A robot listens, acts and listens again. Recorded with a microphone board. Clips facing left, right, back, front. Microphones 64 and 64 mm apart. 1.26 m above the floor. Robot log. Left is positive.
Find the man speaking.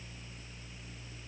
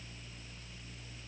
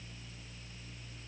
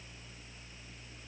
cmd idle
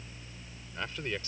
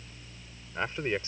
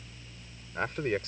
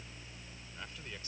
note: The man speaking: 150° right.
cmd yaw -150
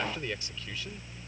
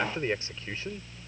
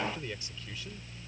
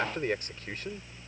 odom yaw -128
note: The man speaking is now 35° right.
cmd yaw -35
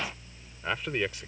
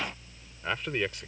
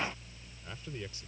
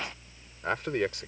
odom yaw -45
end: Facing the man speaking.